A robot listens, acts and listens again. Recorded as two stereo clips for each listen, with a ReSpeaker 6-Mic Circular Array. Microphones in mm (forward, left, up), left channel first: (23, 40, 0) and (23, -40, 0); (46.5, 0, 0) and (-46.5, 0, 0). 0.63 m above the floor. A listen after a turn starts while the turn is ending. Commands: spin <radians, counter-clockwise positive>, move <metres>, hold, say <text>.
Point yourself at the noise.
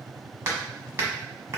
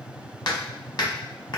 spin -0.61
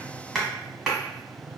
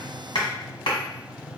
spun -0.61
say Found it: hammering, straight ahead, 1 to 2 m away.